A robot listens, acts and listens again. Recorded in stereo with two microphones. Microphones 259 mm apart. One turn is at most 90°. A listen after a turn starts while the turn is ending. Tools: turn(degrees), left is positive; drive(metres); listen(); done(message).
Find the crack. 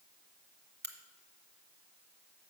turn(degrees=-40)
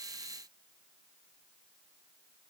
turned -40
listen()
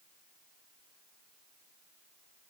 done("I heard a crack, but can't make it out now. It was about straight ahead or 100° right.")